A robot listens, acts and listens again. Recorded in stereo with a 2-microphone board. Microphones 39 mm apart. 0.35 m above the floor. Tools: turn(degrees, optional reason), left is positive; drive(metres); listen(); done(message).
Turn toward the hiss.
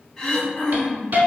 turn(degrees=-55, reason="The hiss: about 55° right or 125° right.")
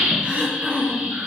turn(degrees=-75, reason="So it is at 75° right.")
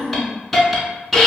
done("Found it: a hiss, straight ahead.")